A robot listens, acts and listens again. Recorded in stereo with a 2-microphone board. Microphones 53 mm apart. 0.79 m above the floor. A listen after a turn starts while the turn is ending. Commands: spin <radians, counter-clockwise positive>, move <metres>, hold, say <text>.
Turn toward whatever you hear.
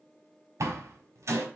spin -1.31
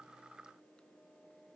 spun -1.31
hold
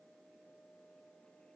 say I heard a door slam, but can't make it out now. It was about straight ahead or 30° right.